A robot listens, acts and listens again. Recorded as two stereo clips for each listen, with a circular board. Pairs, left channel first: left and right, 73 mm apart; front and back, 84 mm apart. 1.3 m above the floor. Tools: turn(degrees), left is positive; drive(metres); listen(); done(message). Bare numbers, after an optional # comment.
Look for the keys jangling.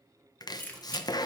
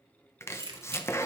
# The keys jangling: 155° left.
turn(155)
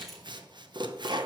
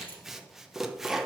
done("Found it: keys jangling, straight ahead.")